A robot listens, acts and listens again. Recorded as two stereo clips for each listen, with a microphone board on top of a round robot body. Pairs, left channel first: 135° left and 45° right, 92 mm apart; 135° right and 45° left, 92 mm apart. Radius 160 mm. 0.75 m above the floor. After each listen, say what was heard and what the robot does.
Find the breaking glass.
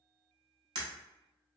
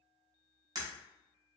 Facing the breaking glass, under 1 m away.